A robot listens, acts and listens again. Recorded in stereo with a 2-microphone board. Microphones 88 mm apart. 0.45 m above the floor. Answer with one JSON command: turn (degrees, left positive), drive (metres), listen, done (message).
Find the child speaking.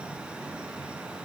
{"listen": true}
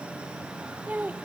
{"turn": -20}
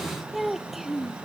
{"turn": -30}
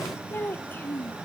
{"turn": 20}
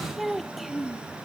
{"done": "Facing the child speaking."}